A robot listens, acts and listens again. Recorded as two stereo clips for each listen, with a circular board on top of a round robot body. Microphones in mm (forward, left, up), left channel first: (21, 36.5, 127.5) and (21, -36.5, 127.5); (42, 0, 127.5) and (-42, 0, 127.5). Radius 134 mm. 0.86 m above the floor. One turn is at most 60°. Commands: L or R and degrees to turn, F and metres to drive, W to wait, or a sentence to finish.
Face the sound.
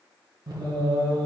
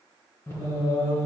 R55
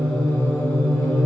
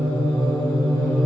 L40
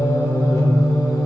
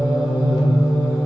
L55
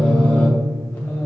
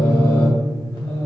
L30
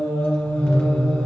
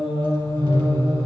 L15
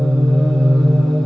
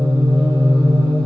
Facing the singing.